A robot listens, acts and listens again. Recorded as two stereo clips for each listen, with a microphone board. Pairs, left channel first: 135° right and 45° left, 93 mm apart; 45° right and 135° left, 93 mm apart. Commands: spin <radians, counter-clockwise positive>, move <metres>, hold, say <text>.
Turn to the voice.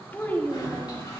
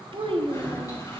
spin 2.71
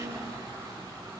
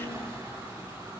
hold
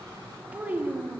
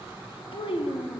spin -0.44
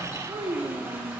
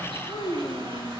say Found it: a child speaking, straight ahead.